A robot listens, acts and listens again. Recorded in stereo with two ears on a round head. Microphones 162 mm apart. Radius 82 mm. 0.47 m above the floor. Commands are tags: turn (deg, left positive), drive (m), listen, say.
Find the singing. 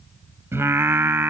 <turn deg="-30"/>
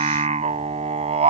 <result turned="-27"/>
<turn deg="-140"/>
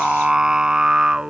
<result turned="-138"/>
<say>Found it: singing, straight ahead.</say>